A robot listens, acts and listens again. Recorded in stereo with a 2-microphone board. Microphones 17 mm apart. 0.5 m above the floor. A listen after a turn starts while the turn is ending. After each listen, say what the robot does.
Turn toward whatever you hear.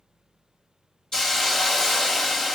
Turn 30° left.
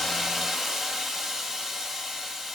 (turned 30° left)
Found it: a hiss, straight ahead.